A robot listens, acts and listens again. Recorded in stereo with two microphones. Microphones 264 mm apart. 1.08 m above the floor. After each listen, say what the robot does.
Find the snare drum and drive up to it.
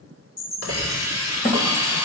Turn 30° left.
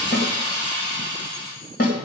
Turn 120° left.
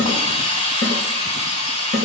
Turn 55° left.
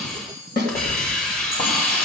Turn 35° left.
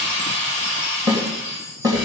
Turn 15° right.
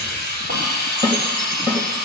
Drive 1.0 m forward.
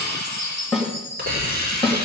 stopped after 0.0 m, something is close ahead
Something is in my way. I am facing the snare drum but have not reached it.